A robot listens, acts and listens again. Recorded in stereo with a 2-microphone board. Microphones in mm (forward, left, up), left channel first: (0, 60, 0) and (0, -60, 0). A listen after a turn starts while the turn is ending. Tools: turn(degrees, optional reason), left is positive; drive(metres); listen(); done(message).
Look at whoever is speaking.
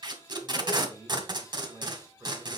turn(degrees=-25, reason="The man speaking: about 25° right or 155° right.")
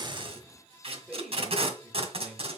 turn(degrees=-10, reason="So it is at 10° right.")
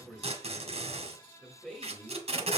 done("Facing the man speaking, 1 to 2 m away.")